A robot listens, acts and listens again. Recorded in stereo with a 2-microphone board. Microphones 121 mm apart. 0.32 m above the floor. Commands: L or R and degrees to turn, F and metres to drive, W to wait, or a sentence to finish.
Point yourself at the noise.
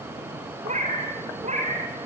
R75
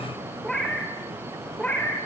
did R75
L15
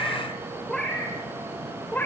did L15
L15
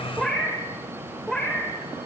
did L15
Found it: a cat meowing, straight ahead, 2 to 4 m away.